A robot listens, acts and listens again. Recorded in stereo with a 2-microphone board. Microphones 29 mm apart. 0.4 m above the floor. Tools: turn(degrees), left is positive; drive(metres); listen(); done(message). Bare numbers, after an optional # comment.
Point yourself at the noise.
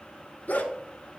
# The dog barking: about 60° left or 120° left.
turn(60)
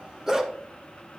# So it is at 15° right.
turn(-15)
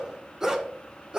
# The dog barking is now 30° right.
turn(-30)
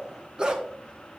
# The dog barking is now 30° right.
turn(-30)
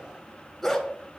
done("Found it: a dog barking, straight ahead, 1 to 2 m away.")